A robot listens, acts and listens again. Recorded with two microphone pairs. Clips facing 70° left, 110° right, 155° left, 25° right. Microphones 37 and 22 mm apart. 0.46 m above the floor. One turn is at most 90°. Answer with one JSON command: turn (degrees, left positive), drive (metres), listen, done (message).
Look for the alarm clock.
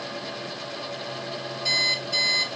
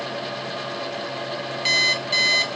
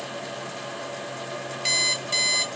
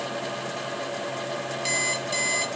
{"turn": -90}
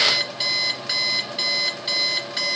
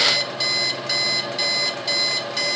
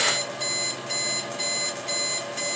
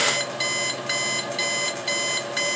{"done": "Facing the alarm clock, 2 to 4 m away."}